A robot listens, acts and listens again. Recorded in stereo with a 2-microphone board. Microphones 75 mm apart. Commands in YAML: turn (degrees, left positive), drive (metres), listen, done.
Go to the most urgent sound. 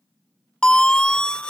turn: 30
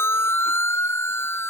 turn: 145
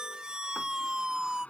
turn: -10
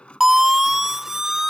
drive: 1.0
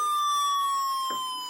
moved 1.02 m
drive: 1.0
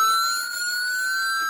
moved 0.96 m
drive: 1.0
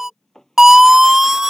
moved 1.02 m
drive: 1.0
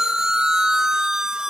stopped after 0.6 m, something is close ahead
turn: -10
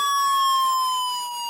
done: "I am next to the siren."